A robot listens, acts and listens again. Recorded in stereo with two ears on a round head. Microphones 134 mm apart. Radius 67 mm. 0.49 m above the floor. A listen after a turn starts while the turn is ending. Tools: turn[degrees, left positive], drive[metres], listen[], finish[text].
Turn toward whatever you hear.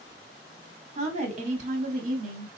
Thought: The woman speaking: about 55° right or 125° right.
Action: turn[-55]
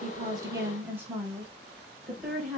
Action: finish[Facing the woman speaking, 1 to 2 m away.]